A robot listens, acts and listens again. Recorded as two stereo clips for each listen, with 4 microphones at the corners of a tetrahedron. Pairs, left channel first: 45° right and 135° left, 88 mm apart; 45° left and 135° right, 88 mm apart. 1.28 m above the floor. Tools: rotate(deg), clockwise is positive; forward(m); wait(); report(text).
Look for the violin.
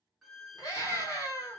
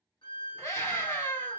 rotate(-50)
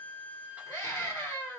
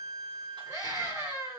rotate(35)
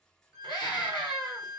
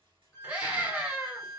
rotate(10)
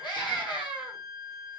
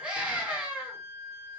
report("Found it: a violin, straight ahead, 1 to 2 m away.")